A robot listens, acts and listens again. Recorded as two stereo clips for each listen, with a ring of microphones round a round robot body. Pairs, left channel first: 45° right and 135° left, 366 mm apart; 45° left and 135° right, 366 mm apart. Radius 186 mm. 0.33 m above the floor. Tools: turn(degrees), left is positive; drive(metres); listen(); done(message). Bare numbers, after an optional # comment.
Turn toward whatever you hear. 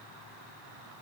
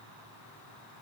listen()
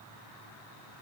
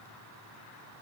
listen()
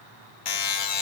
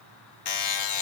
done("Facing the buzzer.")